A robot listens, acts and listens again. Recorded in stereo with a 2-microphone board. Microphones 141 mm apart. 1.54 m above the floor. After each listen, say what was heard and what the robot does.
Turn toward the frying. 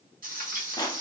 Turn 90° right.
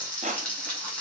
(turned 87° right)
So it is at 10° left. Turn 10° left.
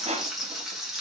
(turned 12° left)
Found it: frying, straight ahead, 1 to 2 m away.